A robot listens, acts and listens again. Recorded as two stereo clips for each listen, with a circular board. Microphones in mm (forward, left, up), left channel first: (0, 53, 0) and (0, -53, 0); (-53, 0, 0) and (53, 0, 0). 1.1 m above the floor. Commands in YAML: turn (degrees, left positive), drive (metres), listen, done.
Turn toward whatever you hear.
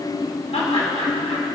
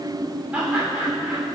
turn: 75
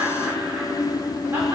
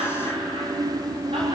turn: -20
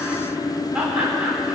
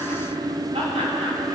turn: -15
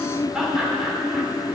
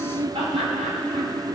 done: "Facing the laughter, over 4 m away."